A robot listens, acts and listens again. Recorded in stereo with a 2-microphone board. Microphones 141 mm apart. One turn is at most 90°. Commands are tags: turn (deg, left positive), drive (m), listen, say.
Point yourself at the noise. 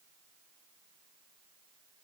<listen/>
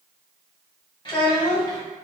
<turn deg="25"/>
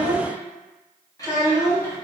<turn deg="15"/>
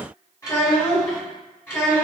<turn deg="15"/>
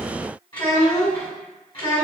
<turn deg="35"/>
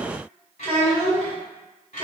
<turn deg="90"/>
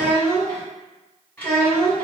<turn deg="15"/>
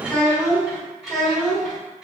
<say>Facing the child speaking, 1 to 2 m away.</say>